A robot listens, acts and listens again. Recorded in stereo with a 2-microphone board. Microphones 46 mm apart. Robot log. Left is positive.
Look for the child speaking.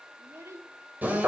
cmd yaw -90
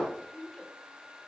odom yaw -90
note: So it is at 10° left.
cmd yaw +10
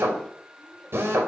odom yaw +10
cmd idle
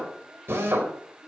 cmd idle
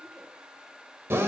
end: I heard a child speaking from this way, but can't make it out now.